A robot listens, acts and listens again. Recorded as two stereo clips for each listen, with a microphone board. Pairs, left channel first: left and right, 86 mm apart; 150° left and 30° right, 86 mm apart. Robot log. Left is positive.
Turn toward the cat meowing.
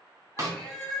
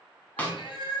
note: The cat meowing: 170° left.
cmd yaw +170
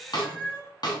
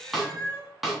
note: The cat meowing is now 25° left.
cmd yaw +25
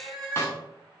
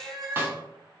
note: The cat meowing is now 10° left.
cmd yaw +10
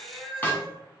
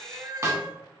note: The cat meowing is now 10° left.
cmd yaw +10
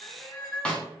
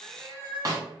end: Found it: a cat meowing, straight ahead, 2 to 4 m away.